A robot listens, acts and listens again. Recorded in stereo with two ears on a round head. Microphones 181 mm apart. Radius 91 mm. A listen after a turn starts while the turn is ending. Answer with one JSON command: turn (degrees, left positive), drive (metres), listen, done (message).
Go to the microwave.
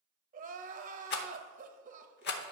{"listen": true}
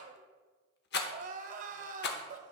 {"listen": true}
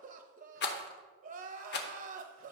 {"done": "I can't make out a microwave, only a rattle and crying."}